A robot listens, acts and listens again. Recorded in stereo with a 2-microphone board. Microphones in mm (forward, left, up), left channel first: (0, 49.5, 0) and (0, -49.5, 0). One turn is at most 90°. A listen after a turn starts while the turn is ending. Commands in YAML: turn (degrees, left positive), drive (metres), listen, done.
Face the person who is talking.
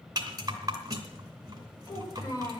turn: 40
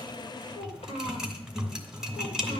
turn: 90
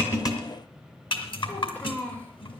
turn: 15
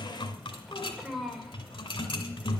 done: "Found it: a child speaking, straight ahead."